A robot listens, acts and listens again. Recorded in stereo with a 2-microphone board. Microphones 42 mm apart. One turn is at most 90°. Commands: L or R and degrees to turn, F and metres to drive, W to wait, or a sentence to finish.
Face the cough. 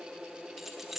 W
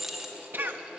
R55
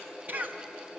R55
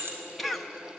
Found it: a cough, straight ahead.